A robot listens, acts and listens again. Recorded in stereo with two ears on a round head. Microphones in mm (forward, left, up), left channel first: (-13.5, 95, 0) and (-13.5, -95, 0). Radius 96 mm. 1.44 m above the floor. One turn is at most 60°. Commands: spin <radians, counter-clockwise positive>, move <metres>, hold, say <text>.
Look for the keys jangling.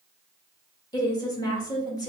hold
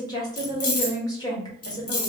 spin 1.05
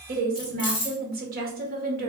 spin 0.35
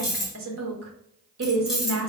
say Facing the keys jangling, 1 to 2 m away.